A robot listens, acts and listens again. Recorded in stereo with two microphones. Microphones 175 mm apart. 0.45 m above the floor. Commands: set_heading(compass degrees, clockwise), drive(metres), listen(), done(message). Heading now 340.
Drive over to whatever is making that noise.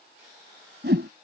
set_heading(55)
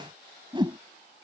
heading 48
set_heading(73)
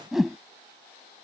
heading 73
drive(1.0)
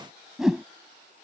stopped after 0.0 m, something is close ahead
done("Something is in my way. I am facing the whoosh but have not reached it.")